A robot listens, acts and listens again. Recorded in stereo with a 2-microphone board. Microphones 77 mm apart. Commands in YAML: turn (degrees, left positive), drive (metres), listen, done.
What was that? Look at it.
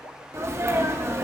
turn: -35
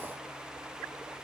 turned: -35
listen: true
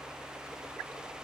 done: "I heard a sneeze, but can't make it out now. It was about straight ahead or 110° right."